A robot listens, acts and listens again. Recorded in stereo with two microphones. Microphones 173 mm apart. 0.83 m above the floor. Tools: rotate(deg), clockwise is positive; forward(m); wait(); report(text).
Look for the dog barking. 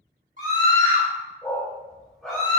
rotate(-30)
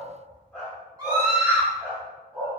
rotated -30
rotate(30)
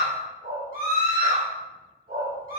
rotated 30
rotate(120)
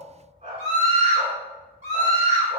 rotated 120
rotate(40)
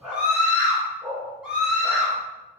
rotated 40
report("Found it: a dog barking, straight ahead, 2 to 4 m away.")